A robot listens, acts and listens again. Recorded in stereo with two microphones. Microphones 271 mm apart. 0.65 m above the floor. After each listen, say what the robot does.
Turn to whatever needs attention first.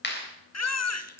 Turn 70° left.
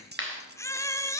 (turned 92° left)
Turn 10° left.
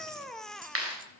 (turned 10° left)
Facing the baby crying, under 1 m away.